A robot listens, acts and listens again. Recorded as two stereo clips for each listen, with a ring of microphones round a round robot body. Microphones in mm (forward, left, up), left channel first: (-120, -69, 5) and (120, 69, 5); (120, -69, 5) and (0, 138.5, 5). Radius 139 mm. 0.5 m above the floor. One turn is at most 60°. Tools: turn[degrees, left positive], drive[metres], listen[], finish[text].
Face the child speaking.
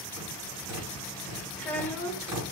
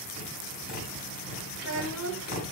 Thought: The child speaking: 125° left.
Action: turn[60]
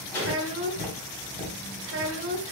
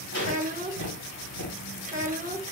Thought: The child speaking is now 70° left.
Action: turn[60]
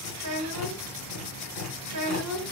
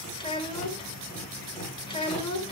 Action: finish[Found it: a child speaking, straight ahead, 1 to 2 m away.]